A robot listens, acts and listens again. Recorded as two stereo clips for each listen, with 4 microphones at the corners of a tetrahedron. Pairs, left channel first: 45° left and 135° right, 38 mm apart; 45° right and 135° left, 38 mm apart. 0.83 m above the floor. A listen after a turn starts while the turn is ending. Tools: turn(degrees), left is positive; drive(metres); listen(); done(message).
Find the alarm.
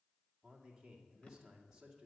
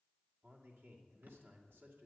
listen()
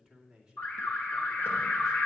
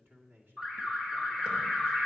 turn(degrees=60)
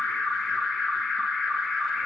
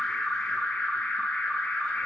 turn(degrees=-25)
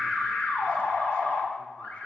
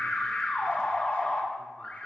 turn(degrees=10)
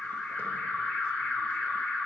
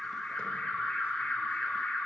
done("Found it: an alarm, straight ahead.")